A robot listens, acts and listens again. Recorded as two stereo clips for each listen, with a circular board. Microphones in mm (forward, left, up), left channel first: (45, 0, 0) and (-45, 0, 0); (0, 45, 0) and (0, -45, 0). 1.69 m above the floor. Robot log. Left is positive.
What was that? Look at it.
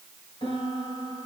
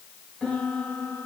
note: The piano: 10° left.
cmd yaw +10
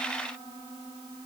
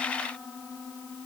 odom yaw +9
end: Found it: a piano, straight ahead, over 4 m away.